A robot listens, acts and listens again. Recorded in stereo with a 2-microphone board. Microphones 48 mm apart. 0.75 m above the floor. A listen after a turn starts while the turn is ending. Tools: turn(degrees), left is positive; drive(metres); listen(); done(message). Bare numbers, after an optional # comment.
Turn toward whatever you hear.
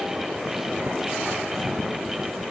listen()
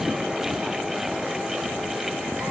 listen()
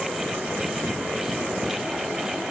done("I can't make out anything to turn to.")